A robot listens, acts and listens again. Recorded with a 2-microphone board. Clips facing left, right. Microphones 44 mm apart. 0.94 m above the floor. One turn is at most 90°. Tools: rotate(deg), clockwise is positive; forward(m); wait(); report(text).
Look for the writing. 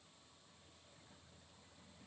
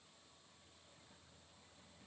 wait()
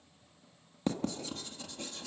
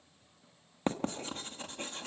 rotate(40)
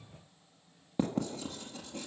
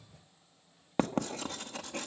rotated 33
rotate(90)
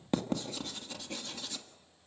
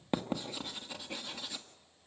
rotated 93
rotate(10)
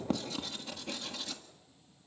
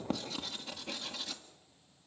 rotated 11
report("Found it: writing, straight ahead.")